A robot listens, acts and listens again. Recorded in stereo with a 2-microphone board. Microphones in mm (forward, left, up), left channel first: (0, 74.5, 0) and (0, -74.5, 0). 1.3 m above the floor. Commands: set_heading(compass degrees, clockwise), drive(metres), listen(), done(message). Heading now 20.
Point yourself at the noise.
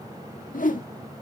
set_heading(310)
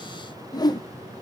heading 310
set_heading(280)
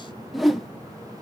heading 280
done("Found it: a whoosh, straight ahead.")